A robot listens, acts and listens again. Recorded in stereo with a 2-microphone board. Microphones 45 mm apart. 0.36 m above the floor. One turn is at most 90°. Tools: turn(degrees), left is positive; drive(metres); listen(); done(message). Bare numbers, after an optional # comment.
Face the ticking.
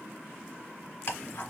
# The ticking: about 70° left or 110° left.
turn(70)
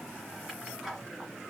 done("Found it: ticking, straight ahead, 1 to 2 m away.")